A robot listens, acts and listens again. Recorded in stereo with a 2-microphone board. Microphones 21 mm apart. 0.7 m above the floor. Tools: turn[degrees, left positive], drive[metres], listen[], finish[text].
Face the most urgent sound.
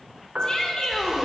Thought: The shout: about 35° left or 145° left.
Action: turn[35]
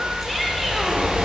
Action: listen[]
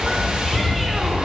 Action: listen[]
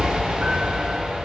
Action: finish[I heard a shout, but can't make it out now. It was about straight ahead or 110° left.]